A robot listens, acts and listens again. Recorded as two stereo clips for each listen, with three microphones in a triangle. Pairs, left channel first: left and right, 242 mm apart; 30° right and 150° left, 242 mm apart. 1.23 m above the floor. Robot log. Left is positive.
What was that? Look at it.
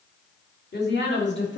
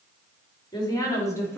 note: The woman speaking: 50° left.
cmd yaw +50
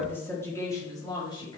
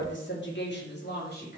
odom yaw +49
note: The woman speaking is now 20° left.
cmd yaw +20
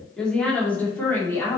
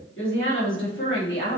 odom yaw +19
note: The woman speaking is now 10° left.
cmd yaw +10
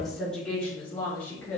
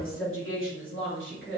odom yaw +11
note: The woman speaking is now 10° left.
cmd yaw +10
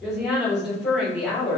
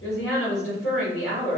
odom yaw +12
end: Facing the woman speaking, 2 to 4 m away.